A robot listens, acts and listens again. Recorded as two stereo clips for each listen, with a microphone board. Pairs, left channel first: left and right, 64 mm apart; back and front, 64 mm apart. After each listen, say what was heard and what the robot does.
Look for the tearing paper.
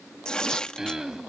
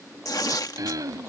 The tearing paper: 165° left. Turn 165° left.
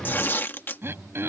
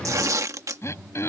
The tearing paper is now 35° left. Turn 35° left.
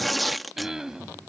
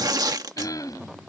Found it: tearing paper, straight ahead.